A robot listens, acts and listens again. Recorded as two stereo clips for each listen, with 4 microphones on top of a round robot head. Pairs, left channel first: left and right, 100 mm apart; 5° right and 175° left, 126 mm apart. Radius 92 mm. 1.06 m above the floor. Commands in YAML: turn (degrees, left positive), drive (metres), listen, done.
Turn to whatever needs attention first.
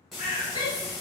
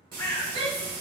turn: 135
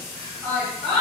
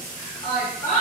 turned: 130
done: "Found it: a shout, straight ahead."